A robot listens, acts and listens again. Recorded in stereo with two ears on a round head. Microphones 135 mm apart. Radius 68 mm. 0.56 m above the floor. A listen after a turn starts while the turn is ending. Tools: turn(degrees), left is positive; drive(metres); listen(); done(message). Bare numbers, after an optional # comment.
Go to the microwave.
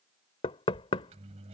# The microwave: about 45° right or 135° right.
turn(-45)
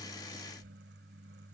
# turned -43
# So it is at 90° right.
turn(-90)
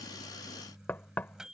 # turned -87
drive(1.0)
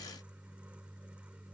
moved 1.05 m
# The microwave is now 10° right.
turn(-10)
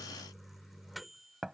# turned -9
drive(1.0)
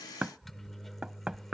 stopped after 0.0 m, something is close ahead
done("Arrived at the microwave, straight ahead.")